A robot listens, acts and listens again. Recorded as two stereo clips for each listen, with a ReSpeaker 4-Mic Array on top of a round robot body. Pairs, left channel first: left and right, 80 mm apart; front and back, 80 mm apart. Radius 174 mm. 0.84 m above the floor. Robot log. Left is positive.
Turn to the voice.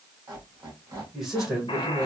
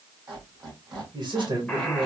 note: The man speaking: 175° right.
cmd yaw -175
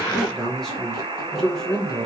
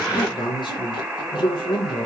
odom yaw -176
end: Facing the man speaking.